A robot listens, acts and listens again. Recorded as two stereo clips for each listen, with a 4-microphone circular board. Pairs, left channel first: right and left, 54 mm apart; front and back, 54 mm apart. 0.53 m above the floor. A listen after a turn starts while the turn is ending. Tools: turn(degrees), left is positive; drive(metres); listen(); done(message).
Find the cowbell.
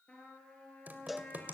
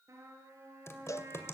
done("Facing the cowbell, under 1 m away.")